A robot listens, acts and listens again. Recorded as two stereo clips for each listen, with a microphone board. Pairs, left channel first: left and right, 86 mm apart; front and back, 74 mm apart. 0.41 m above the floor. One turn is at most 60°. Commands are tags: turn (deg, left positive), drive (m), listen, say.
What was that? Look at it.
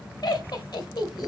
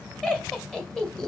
<turn deg="60"/>
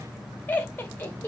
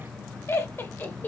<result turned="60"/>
<turn deg="40"/>
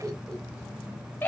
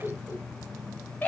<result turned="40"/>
<turn deg="45"/>
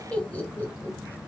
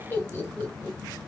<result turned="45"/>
<turn deg="45"/>
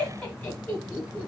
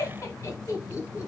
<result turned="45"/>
<turn deg="25"/>
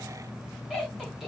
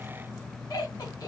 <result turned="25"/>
<say>Facing the laughter.</say>